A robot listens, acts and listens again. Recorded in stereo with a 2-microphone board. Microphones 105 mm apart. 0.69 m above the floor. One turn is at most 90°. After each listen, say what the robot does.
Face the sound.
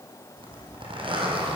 Turn 55° right.
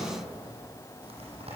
Turn 70° right.
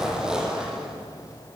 Facing the zipper, over 4 m away.